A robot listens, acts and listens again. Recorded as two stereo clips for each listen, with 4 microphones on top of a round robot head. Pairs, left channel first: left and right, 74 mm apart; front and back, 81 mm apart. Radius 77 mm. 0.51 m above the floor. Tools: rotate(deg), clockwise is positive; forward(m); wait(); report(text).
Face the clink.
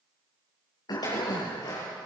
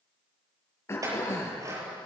rotate(-135)
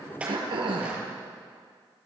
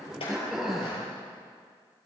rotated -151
rotate(20)
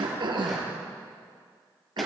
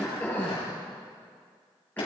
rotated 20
wait()
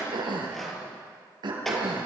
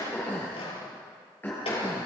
report("Facing the clink.")